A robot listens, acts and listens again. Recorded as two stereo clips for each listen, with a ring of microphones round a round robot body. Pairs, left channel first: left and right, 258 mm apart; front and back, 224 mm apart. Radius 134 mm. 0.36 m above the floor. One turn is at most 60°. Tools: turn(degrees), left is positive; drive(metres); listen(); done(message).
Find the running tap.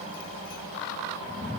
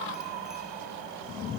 listen()
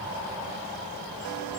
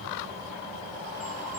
listen()
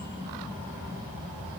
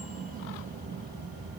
done("I can't make out a running tap to turn to.")